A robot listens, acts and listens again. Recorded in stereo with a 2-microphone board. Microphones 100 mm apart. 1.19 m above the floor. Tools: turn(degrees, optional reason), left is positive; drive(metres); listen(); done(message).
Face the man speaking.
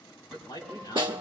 turn(degrees=40, reason="The man speaking: about 40° left or 140° left.")
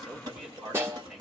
turn(degrees=-10, reason="So it is at 10° right.")
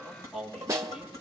done("Facing the man speaking.")